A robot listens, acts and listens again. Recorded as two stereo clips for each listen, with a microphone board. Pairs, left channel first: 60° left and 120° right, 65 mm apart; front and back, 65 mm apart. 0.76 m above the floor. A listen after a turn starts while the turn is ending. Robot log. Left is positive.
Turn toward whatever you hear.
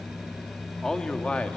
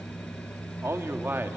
note: The man speaking: 130° left.
cmd yaw +130
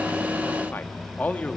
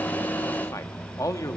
end: Facing the man speaking.